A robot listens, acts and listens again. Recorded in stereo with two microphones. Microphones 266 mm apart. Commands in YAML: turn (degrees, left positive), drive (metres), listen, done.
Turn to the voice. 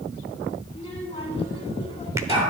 turn: 20
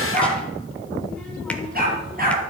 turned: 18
listen: true
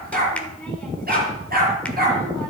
done: "Found it: a child speaking, straight ahead."